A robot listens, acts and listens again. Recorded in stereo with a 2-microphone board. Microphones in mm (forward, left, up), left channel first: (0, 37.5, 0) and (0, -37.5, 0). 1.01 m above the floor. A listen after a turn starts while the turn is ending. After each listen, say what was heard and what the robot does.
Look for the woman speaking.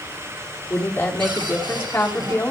The woman speaking: about 25° left or 155° left. Turn 25° left.
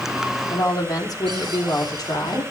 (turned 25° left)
So it is at 125° left. Turn 125° left.
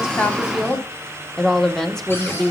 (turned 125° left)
Found it: a woman speaking, straight ahead.